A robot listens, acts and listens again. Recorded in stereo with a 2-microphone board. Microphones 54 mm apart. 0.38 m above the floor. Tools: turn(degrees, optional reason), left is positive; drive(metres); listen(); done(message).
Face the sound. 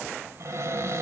turn(degrees=-65, reason="The cupboard door: about 65° right or 115° right.")
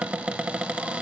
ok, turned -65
turn(degrees=-30, reason="So it is at 30° right.")
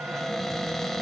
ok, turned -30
done("Facing the cupboard door, under 1 m away.")